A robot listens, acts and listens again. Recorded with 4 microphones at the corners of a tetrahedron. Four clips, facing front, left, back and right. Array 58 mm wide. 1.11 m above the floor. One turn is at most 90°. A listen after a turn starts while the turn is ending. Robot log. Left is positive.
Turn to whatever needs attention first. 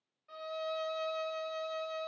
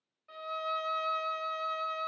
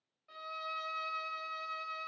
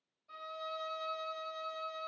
cmd idle
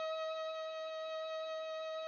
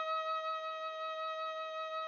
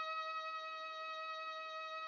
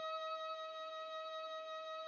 cmd idle
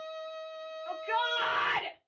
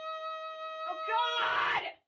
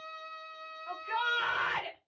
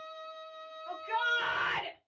note: The shout: 35° left.
cmd yaw +35
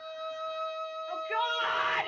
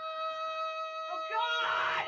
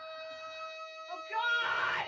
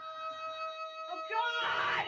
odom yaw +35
note: The shout is now 10° right.
cmd yaw -10
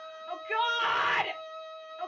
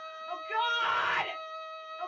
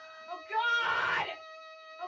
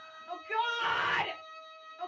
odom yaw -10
end: Found it: a shout, straight ahead, 1 to 2 m away.